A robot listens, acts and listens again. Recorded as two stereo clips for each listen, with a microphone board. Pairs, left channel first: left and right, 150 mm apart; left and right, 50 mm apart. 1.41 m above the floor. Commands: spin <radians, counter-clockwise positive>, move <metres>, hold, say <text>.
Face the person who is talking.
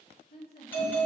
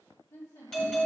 spin 1.57
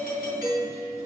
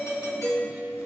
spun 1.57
hold
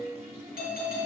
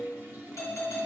hold
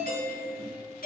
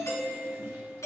say I heard a woman speaking from this way, but can't make it out now.